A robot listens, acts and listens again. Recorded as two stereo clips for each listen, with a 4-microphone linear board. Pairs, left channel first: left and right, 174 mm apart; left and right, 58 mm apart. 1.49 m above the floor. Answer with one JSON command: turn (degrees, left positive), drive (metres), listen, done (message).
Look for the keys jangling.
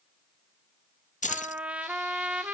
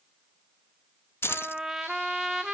{"turn": 45}
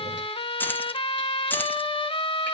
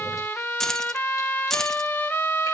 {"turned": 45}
{"turn": 10}
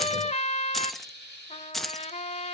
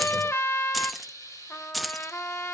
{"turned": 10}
{"done": "Found it: keys jangling, straight ahead."}